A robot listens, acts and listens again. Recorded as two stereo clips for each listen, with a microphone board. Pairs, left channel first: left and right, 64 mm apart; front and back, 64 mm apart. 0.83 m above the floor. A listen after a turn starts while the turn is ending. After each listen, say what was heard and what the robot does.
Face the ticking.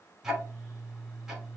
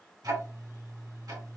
The ticking: 170° right. Turn 170° right.
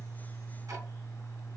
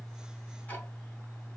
The ticking is now 65° right. Turn 65° right.
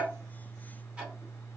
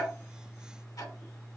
The ticking is now 20° right. Turn 20° right.
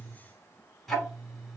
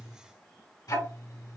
Found it: ticking, straight ahead, 2 to 4 m away.